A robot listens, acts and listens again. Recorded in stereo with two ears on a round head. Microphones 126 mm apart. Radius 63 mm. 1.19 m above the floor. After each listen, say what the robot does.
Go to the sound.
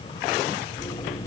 Turn 20° left.
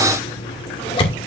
Turn 135° left.
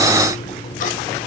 Turn 60° left.
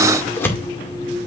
Turn 15° left.
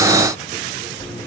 Drive 1.0 m forward.
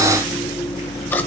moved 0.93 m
Turn 15° left.
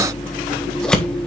Drive 1.0 m forward.
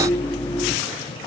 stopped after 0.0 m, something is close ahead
Turn 10° left.
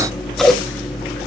Arrived at the scissors, straight ahead.